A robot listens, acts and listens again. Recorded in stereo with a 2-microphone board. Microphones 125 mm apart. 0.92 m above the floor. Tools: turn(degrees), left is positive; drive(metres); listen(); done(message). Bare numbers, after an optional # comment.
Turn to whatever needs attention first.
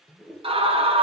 # The scream: about 50° right or 130° right.
turn(-50)
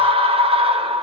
# So it is at 65° right.
turn(-65)
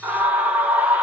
# The scream is now 15° right.
turn(-15)
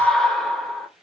done("Found it: a scream, straight ahead, 1 to 2 m away.")